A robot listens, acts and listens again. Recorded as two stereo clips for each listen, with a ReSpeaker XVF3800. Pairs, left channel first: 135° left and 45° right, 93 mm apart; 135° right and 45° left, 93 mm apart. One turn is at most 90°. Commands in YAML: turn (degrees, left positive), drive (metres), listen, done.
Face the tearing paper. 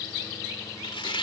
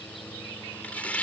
turn: 90
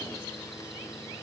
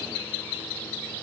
turn: 60
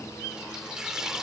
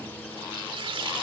turn: 35
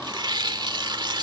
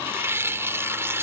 turn: -15
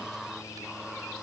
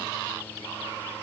listen: true
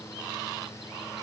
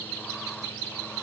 listen: true
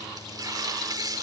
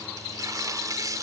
done: "Found it: tearing paper, straight ahead."